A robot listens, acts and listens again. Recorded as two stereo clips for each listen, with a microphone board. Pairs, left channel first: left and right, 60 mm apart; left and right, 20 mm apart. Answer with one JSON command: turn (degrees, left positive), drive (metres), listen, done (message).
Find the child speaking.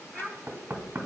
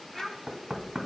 {"turn": 30}
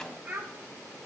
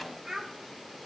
{"turn": -30}
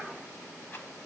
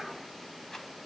{"listen": true}
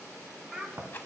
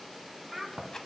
{"done": "Facing the child speaking, 2 to 4 m away."}